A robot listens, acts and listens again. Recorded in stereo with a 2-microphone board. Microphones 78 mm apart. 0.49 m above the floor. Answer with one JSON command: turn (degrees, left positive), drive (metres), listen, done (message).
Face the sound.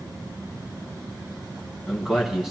{"turn": -30}
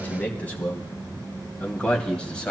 {"turn": 10}
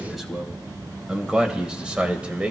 {"turn": -15}
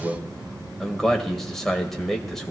{"done": "Found it: a man speaking, straight ahead, 2 to 4 m away."}